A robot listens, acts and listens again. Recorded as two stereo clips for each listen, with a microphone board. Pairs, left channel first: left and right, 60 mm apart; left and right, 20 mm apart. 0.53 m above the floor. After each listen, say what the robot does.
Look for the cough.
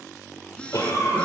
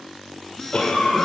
Turn 60° left.
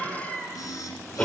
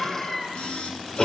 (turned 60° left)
Turn 20° left.
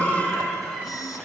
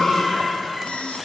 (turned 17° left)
Found it: a cough, straight ahead.